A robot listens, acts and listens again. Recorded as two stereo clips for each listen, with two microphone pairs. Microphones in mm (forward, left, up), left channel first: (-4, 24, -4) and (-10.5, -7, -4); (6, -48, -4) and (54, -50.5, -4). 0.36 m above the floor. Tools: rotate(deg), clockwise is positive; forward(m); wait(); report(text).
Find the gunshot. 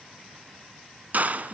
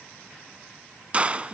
rotate(65)
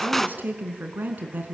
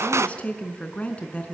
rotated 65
report("Facing the gunshot.")